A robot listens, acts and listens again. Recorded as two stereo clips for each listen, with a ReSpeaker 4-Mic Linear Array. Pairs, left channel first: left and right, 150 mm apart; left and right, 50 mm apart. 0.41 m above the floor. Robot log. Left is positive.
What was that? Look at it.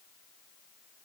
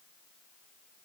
cmd idle
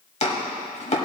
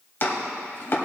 note: The chopping: about 45° left or 135° left.
cmd yaw +45
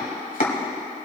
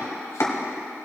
note: So it is at 85° left.
cmd yaw +85
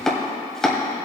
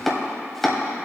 end: Facing the chopping, 1 to 2 m away.